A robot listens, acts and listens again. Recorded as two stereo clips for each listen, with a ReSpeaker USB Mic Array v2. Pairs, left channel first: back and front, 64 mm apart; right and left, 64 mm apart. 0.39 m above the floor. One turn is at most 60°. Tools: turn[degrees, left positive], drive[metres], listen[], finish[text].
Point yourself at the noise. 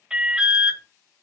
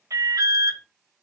Thought: The alarm: 75° left.
Action: turn[60]
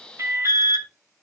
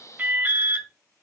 Thought: The alarm is now 30° left.
Action: turn[30]
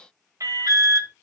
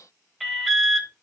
Action: finish[Found it: an alarm, straight ahead, 1 to 2 m away.]